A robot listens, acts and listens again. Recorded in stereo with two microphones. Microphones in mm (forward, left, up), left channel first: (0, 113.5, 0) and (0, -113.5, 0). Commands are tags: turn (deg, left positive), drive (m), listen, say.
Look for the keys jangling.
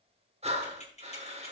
<turn deg="30"/>
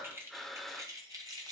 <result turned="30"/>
<turn deg="-20"/>
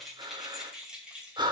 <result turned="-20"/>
<say>Facing the keys jangling.</say>